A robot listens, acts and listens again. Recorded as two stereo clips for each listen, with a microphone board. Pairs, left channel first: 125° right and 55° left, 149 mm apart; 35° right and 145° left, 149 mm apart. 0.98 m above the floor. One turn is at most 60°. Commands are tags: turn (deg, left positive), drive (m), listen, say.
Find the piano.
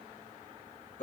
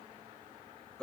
<listen/>
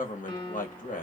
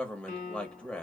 <turn deg="-60"/>
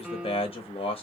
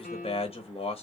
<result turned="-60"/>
<turn deg="-30"/>
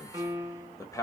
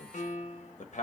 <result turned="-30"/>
<turn deg="-10"/>
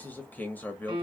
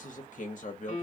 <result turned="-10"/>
<say>Found it: a piano, straight ahead.</say>